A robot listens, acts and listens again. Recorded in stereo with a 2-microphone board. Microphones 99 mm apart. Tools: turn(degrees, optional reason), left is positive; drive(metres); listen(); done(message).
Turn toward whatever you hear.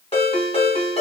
turn(degrees=90)
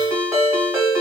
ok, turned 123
turn(degrees=-30, reason="So it is at 30° right.")
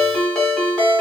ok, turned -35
done("Facing the ringtone, 1 to 2 m away.")